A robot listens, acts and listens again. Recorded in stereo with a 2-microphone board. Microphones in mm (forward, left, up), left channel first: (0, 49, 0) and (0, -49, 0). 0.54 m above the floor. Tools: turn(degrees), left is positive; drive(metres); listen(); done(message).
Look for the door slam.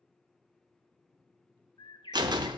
turn(degrees=-45)
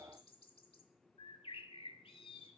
listen()
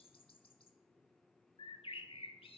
done("I heard a door slam, but can't make it out now. It was about straight ahead or 90° right.")